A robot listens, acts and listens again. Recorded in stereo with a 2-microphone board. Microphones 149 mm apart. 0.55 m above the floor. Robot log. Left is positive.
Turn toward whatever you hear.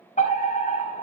note: The fire alarm: about 60° left or 120° left.
cmd yaw +60
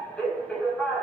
end: Found it: a fire alarm, straight ahead.